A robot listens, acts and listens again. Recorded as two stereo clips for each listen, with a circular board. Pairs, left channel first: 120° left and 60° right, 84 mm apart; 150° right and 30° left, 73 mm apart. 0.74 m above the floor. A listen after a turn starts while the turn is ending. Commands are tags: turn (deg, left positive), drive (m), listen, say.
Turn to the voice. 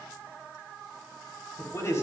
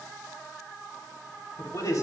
<turn deg="175"/>
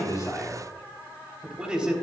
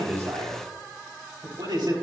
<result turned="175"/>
<turn deg="20"/>
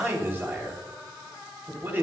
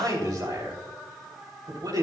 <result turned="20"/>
<say>Facing the man speaking.</say>